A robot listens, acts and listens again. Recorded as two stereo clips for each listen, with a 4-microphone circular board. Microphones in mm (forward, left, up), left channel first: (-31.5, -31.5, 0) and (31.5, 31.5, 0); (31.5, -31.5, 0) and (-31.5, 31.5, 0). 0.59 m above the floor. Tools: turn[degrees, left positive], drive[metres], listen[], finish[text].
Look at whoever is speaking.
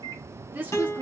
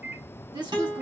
Thought: The woman speaking: 110° left.
Action: turn[110]
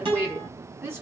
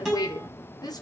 Thought: The woman speaking is now 10° right.
Action: turn[-10]
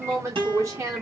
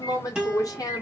Action: finish[Found it: a woman speaking, straight ahead.]